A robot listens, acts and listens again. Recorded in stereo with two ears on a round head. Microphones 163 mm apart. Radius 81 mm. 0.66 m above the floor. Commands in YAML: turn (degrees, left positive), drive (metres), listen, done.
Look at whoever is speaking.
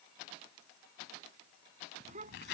turn: -40
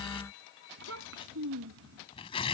turn: -100
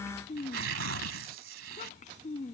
turn: 40
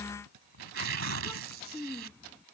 turn: 10
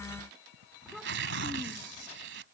done: "Facing the child speaking."